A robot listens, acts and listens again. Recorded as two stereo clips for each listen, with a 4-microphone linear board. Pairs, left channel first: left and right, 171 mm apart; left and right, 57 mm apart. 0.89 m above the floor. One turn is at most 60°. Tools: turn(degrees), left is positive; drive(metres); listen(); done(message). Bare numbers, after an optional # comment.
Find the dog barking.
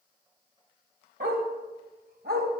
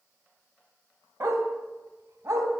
# The dog barking: about 70° right or 110° right.
turn(-60)
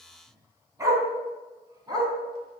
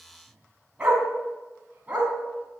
# So it is at 25° right.
turn(-25)
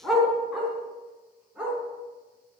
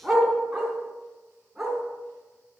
done("Found it: a dog barking, straight ahead, over 4 m away.")